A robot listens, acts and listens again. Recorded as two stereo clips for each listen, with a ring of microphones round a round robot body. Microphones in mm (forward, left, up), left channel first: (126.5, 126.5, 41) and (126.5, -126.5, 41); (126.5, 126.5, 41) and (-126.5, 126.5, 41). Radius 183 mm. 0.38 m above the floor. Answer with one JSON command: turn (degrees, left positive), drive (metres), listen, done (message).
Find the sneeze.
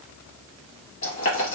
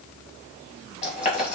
{"listen": true}
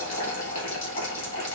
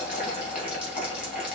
{"listen": true}
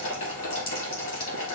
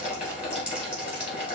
{"done": "I can't make out a sneeze, only boiling."}